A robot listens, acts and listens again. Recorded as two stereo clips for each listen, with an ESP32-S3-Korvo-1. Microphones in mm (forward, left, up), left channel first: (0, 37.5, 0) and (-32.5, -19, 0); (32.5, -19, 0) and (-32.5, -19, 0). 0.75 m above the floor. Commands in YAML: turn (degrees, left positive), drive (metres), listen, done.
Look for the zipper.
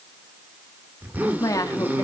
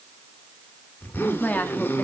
turn: -60
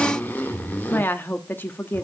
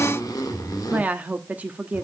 done: "Found it: a zipper, straight ahead, 1 to 2 m away."